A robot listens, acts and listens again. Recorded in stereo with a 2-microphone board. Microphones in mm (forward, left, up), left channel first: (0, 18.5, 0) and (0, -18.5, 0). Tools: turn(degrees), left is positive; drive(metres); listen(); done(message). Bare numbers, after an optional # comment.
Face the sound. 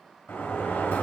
# The sliding door: about 70° left or 110° left.
turn(70)
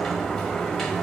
# So it is at 10° left.
turn(10)
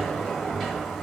done("Facing the sliding door.")